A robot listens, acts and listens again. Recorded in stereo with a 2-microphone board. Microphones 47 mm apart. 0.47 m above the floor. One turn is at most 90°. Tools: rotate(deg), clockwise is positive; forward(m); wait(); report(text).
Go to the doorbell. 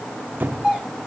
rotate(30)
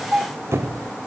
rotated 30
rotate(90)
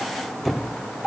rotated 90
rotate(30)
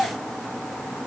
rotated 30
forward(1.0)
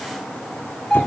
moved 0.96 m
forward(1.0)
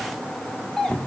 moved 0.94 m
forward(1.0)
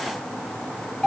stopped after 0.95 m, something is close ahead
rotate(-10)
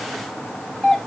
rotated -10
report("I am next to the doorbell.")